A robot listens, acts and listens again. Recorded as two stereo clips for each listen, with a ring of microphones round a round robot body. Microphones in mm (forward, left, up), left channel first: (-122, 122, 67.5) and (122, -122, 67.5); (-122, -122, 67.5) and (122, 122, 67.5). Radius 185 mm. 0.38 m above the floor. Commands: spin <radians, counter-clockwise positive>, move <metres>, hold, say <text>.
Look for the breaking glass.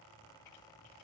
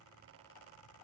hold
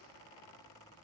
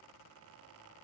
hold
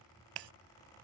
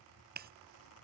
spin -0.35
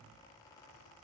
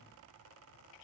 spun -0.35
say Facing where the breaking glass came from. I can't hear it now.